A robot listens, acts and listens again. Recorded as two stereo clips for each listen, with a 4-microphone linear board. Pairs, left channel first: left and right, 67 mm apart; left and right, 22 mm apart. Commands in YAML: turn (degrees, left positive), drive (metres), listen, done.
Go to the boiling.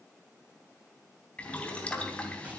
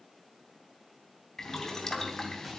turn: 20
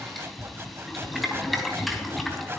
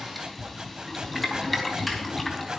drive: 1.0
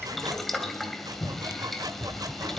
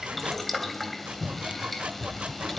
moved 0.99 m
drive: 1.0
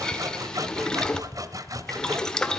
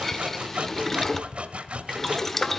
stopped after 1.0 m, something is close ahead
turn: 15
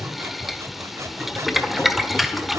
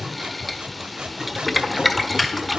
done: "Arrived at the boiling, straight ahead."